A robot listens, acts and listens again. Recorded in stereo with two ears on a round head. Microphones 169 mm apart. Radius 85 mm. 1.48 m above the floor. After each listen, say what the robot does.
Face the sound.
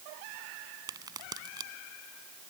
Turn 20° right.
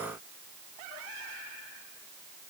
Keep listening.
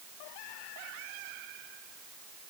I heard a crack, but can't make it out now. It was about straight ahead or 140° right.